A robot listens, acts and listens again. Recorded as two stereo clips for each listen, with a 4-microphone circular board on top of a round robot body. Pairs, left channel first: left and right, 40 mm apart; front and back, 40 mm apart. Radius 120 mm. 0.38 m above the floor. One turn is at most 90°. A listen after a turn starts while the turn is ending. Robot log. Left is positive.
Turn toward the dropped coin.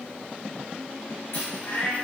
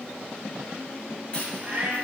note: The dropped coin: 70° left.
cmd yaw +70
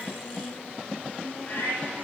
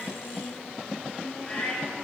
end: I heard a dropped coin from this way, but can't make it out now.